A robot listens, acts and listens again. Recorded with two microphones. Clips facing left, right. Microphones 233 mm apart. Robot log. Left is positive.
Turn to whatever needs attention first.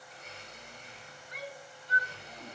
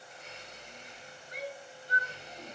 note: The shout: about 40° right or 140° right.
cmd yaw -40
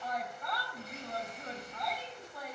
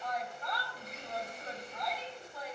end: Found it: a shout, straight ahead.